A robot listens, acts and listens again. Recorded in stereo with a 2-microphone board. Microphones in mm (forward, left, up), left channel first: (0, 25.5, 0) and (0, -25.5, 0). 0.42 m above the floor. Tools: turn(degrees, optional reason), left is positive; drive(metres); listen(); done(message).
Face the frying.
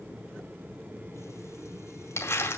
listen()
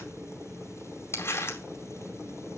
listen()
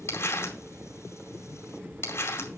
done("I can't make out frying, only crumpling.")